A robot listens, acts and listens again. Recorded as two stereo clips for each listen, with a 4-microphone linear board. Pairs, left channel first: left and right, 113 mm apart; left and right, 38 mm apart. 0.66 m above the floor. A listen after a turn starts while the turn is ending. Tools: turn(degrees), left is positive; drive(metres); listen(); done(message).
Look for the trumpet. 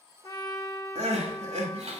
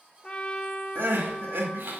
turn(degrees=35)
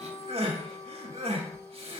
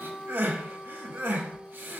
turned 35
turn(degrees=110)
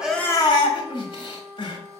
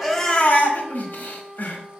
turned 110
done("Found it: a trumpet, straight ahead.")